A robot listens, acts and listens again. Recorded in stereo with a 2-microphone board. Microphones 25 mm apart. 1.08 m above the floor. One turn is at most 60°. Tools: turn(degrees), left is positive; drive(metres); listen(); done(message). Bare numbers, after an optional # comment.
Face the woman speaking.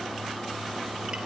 listen()
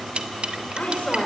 # The woman speaking: about 75° left or 105° left.
turn(60)
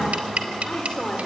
# So it is at 55° left.
turn(55)
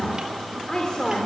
# The woman speaking is now 35° left.
turn(35)
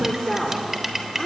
# The woman speaking is now 25° left.
turn(25)
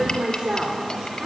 # The woman speaking is now 25° right.
turn(-25)
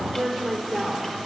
done("Facing the woman speaking.")